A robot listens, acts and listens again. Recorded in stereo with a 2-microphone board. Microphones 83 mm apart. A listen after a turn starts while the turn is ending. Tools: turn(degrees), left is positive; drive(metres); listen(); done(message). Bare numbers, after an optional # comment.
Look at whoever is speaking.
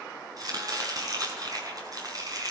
listen()
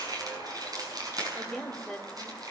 turn(30)
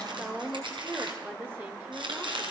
# So it is at 25° right.
turn(-25)
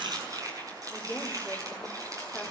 done("Facing the woman speaking, 2 to 4 m away.")